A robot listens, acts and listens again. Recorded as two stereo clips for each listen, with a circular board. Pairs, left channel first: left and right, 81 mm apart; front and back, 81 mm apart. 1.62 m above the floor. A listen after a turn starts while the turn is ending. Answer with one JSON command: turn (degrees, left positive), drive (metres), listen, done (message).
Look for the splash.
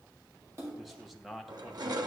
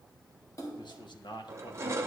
{"turn": -45}
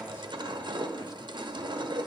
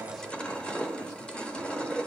{"done": "Facing where the splash came from. I can't hear it now."}